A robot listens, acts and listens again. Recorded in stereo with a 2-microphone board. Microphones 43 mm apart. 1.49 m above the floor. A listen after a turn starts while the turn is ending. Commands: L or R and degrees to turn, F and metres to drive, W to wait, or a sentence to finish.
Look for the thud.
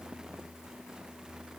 W
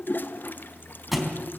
L30
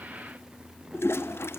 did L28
W
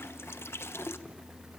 I heard a thud, but can't make it out now. It was about 30° right or 155° left.